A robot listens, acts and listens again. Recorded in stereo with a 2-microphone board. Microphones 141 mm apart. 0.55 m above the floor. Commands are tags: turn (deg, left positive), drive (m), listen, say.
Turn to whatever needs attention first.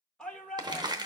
<turn deg="30"/>
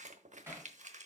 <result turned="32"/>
<listen/>
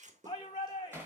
<turn deg="145"/>
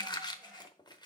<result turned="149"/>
<listen/>
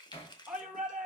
<say>Found it: a shout, straight ahead.</say>